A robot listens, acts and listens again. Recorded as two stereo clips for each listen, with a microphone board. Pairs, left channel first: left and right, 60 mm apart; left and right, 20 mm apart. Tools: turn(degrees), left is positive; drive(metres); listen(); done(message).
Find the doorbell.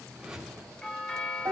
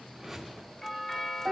turn(degrees=30)
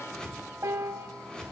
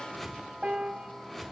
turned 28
listen()
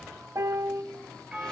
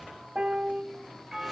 turn(degrees=-15)
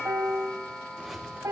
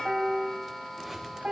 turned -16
done("Facing the doorbell.")